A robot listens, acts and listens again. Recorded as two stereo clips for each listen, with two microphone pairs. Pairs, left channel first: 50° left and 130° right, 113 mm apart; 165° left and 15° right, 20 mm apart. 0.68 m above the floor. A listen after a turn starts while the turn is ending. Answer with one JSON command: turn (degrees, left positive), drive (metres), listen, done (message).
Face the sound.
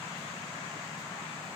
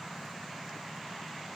{"listen": true}
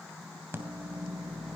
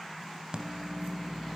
{"turn": -60}
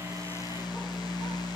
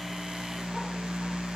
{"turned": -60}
{"done": "Facing the microwave."}